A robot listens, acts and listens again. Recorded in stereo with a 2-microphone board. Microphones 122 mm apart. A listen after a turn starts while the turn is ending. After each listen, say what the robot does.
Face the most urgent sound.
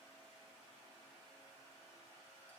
Keep listening.
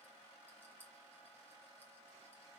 Keep listening.
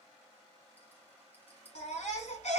Turn 75° left.
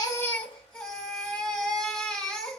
Found it: a baby crying, straight ahead, 1 to 2 m away.